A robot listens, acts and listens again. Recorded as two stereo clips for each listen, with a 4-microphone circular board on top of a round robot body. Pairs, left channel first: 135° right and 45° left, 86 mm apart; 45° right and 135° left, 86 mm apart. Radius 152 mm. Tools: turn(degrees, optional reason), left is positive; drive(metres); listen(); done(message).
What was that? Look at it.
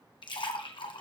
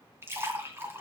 turn(degrees=-160, reason="The splash: 160° right.")
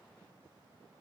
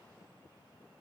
done("I heard a splash from this way, but can't make it out now.")